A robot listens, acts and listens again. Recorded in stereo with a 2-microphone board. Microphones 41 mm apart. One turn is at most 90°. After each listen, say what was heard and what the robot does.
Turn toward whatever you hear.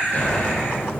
Turn 90° left.
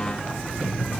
Facing where the explosion came from. I can't hear it now.